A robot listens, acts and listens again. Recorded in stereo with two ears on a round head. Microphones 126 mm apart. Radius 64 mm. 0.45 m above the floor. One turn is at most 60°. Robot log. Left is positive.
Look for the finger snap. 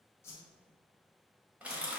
cmd idle
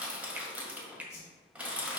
cmd yaw -30
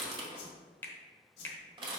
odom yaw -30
note: So it is at 20° left.
cmd yaw +20
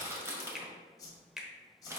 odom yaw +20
end: Facing the finger snap, 1 to 2 m away.